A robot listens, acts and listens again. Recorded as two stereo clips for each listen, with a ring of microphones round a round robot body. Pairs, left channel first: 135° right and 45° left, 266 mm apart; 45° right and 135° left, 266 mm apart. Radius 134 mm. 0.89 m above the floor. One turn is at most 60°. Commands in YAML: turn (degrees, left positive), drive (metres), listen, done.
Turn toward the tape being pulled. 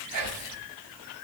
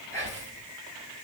listen: true
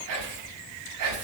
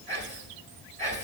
listen: true
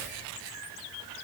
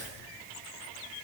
done: "I can't make out tape being pulled to turn to."